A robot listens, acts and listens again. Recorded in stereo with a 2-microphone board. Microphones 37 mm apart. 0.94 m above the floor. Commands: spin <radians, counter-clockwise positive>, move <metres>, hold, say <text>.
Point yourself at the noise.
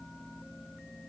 hold
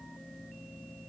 hold
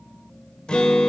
spin 0.44
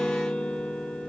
spin 2.27
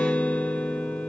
spin 0.70
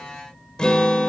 spin 0.35
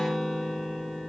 say Facing the guitar.